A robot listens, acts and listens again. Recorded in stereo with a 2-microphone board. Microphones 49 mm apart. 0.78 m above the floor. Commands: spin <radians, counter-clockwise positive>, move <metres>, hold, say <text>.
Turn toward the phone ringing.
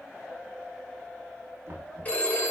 spin 0.52
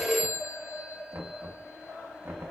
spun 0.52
say Found it: a phone ringing, straight ahead, 1 to 2 m away.